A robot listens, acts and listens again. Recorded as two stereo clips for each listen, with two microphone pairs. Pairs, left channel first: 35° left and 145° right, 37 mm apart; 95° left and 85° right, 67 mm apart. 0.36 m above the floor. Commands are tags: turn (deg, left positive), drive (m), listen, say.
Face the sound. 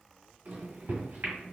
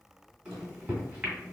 <turn deg="-155"/>
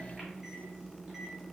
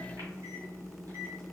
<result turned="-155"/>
<turn deg="-60"/>
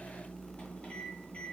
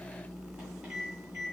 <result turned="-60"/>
<turn deg="-10"/>
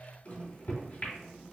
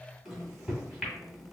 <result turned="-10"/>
<say>Found it: a microwave, straight ahead.</say>